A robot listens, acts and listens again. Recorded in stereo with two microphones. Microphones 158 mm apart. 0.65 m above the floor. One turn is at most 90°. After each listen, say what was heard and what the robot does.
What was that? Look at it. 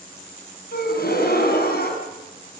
Turn 90° left.
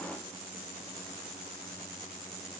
I heard a gasp from this way, but can't make it out now.